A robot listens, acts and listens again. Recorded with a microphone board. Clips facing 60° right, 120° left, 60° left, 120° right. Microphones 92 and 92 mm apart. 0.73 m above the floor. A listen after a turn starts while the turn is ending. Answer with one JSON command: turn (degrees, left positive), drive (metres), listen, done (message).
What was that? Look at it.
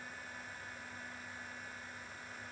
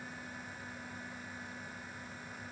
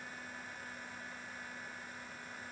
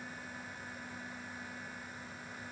{"listen": true}
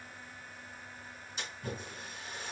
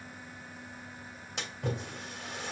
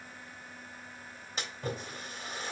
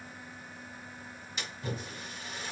{"turn": 110}
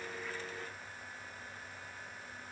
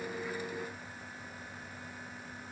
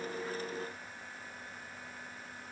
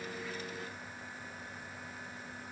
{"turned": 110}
{"done": "Facing where the splash came from. I can't hear it now."}